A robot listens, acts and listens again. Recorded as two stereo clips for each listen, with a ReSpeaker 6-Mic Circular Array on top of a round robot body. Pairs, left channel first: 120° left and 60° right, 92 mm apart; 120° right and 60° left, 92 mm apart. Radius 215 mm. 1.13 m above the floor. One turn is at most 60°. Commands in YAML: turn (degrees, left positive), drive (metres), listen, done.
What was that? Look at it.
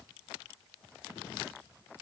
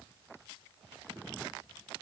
listen: true
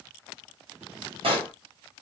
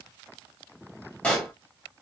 turn: -45
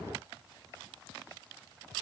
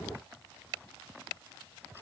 done: "Facing where the pop came from. I can't hear it now."